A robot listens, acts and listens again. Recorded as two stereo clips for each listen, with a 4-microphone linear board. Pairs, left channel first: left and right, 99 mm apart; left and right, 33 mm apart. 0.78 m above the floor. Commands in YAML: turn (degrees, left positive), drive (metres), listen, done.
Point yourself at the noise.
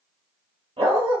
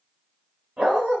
turn: -70
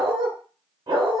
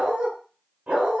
turn: -50
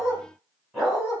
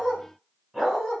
done: "Facing the dog barking, 2 to 4 m away."